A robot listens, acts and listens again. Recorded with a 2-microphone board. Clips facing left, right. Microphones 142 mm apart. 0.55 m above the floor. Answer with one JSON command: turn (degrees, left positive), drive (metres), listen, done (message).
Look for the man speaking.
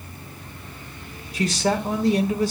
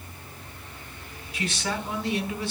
{"turn": 40}
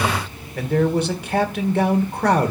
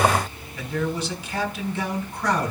{"turn": 90}
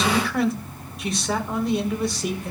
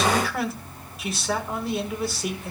{"done": "Facing the man speaking."}